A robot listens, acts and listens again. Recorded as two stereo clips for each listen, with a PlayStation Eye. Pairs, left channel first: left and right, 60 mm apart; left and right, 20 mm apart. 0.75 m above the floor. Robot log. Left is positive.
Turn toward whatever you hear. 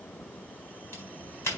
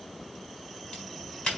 note: The crack: about 45° left or 135° left.
cmd yaw +45
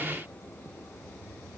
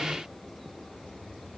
cmd idle
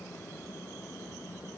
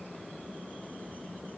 end: I heard a crack, but can't make it out now. It was about straight ahead or 90° left.